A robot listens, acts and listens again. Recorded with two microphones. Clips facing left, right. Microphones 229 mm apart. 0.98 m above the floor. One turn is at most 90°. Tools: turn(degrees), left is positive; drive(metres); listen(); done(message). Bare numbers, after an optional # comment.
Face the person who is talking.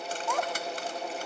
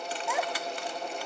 turn(-30)
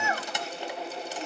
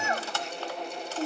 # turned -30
# So it is at 145° right.
turn(-90)
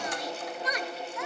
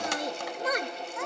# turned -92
# The child speaking is now 50° right.
turn(-50)
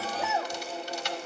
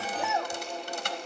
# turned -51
done("Found it: a child speaking, straight ahead, under 1 m away.")